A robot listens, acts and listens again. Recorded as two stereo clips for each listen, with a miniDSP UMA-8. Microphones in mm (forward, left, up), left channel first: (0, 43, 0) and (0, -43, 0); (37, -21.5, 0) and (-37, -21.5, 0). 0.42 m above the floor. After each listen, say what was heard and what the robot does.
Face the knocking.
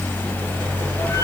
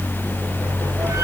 Keep listening.
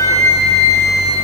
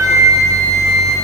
Keep listening.
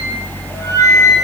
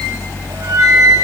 I can't make out knocking to turn to.